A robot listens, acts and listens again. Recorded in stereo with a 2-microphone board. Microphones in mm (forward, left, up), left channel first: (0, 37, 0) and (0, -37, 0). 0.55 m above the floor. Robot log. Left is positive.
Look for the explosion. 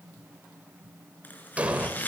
note: The explosion: about 20° right or 160° right.
cmd yaw -20
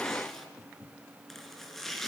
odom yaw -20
cmd idle
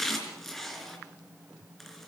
end: I heard an explosion, but can't make it out now. It was about straight ahead or 140° right.